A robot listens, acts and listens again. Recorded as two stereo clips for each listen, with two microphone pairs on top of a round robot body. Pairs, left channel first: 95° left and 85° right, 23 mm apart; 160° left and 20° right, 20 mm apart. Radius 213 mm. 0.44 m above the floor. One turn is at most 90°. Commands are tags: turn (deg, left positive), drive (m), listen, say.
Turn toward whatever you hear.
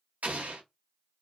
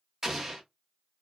<turn deg="-90"/>
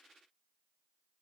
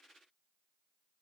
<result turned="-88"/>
<say>Facing where the explosion came from. I can't hear it now.</say>